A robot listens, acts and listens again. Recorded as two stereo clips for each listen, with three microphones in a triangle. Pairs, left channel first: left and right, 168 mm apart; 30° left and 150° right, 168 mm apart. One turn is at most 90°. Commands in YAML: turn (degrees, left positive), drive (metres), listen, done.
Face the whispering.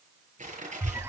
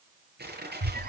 listen: true
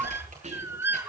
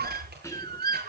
turn: -45
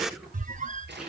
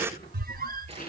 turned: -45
done: "Facing the whispering, over 4 m away."